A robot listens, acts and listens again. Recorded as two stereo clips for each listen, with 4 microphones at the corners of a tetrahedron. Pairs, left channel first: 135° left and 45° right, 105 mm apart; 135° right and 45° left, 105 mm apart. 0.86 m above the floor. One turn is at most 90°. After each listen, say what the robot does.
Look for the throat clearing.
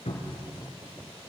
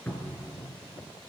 Keep listening.
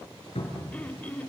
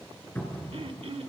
Turn 60° left.
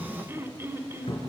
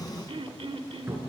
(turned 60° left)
Turn 25° left.
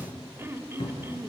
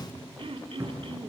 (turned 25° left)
Turn 20° left.
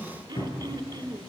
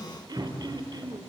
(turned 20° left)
Found it: throat clearing, straight ahead.